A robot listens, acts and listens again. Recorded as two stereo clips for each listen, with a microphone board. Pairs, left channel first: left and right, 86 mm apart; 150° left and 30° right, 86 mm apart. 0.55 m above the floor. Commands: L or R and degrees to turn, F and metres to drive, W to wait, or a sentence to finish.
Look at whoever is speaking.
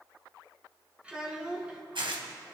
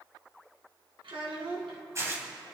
R15
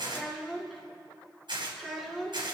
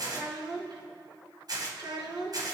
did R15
Found it: a child speaking, straight ahead, over 4 m away.